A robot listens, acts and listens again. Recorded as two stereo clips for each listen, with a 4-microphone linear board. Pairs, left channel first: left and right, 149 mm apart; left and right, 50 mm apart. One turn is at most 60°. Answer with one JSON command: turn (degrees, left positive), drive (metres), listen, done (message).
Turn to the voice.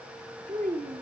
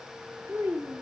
{"turn": -60}
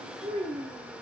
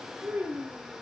{"turn": -40}
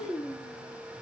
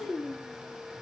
{"turn": 25}
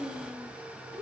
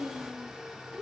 {"turn": -10}
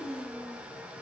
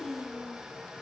{"done": "Facing the child speaking, over 4 m away."}